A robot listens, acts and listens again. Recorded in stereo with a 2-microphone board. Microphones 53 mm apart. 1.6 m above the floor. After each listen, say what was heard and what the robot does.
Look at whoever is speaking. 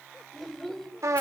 Turn 30° left.
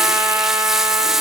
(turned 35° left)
Keep listening.
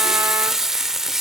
Keep listening.
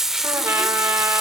I heard a child speaking, but can't make it out now. It was about 30° right or 140° left.